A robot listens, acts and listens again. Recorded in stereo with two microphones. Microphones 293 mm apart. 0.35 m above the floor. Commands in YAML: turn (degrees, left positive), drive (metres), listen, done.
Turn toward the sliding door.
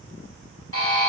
listen: true
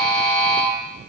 listen: true
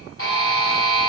done: "I can't make out a sliding door, only a buzzer."